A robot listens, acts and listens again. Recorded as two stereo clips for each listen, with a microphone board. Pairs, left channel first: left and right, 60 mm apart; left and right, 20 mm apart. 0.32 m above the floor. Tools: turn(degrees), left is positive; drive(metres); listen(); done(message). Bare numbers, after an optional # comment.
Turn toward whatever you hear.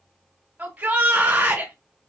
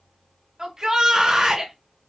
# The shout: about 25° right or 155° right.
turn(-25)
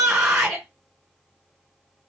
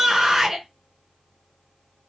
# So it is at 10° right.
turn(-10)
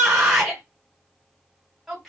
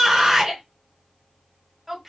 done("Found it: a shout, straight ahead, 1 to 2 m away.")